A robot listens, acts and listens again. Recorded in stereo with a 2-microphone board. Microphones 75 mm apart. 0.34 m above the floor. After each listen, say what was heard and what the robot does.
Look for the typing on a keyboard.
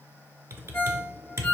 The typing on a keyboard: about 35° right or 145° right. Turn 35° right.
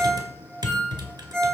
So it is at 110° right. Turn 110° right.
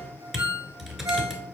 Found it: typing on a keyboard, straight ahead.